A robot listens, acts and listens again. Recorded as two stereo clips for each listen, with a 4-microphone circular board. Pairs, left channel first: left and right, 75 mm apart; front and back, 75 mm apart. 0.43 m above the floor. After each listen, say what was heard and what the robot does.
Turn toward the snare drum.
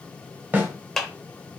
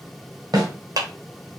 The snare drum: 150° right. Turn 150° right.
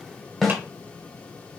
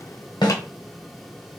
Found it: a snare drum, straight ahead, 1 to 2 m away.